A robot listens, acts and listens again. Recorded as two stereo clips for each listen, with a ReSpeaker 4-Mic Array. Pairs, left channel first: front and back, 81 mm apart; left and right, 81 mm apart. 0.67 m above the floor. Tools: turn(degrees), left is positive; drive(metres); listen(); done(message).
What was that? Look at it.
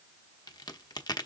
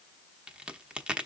turn(degrees=-15)
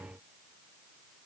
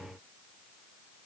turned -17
done("I heard a crack from this way, but can't make it out now.")